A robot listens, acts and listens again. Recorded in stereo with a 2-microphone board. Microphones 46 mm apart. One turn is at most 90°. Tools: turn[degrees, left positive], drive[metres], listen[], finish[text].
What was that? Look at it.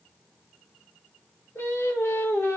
Thought: The singing: about 75° left or 105° left.
Action: turn[75]
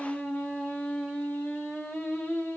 Thought: So it is at 50° left.
Action: turn[50]
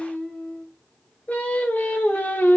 Thought: The singing is now 40° left.
Action: turn[40]
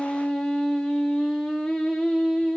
Action: finish[Found it: singing, straight ahead.]